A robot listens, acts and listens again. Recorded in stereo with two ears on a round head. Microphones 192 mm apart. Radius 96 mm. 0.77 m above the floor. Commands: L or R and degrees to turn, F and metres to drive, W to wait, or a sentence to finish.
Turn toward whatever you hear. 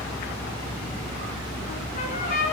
L40
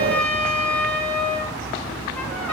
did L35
L10
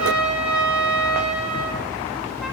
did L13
Found it: a trumpet, straight ahead.